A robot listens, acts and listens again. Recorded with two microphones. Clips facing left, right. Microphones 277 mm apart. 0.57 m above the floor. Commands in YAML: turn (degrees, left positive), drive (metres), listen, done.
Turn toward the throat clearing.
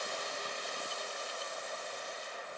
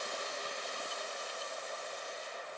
listen: true
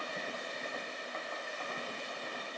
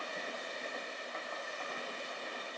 listen: true
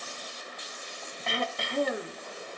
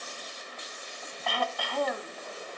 turn: 25
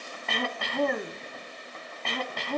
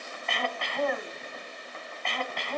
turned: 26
turn: 130
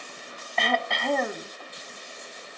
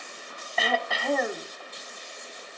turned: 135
done: "Found it: throat clearing, straight ahead."